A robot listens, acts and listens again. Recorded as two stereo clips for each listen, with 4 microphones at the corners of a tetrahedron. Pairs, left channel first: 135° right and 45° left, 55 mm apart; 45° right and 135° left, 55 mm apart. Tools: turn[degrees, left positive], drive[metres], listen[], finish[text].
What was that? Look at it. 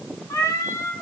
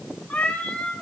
Thought: The cat meowing: 115° right.
Action: turn[-115]
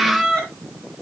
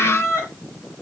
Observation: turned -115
Thought: The cat meowing is now 60° right.
Action: turn[-60]
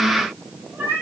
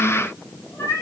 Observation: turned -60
Thought: The cat meowing is now 10° right.
Action: turn[-10]
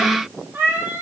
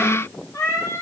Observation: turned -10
Action: finish[Found it: a cat meowing, straight ahead, over 4 m away.]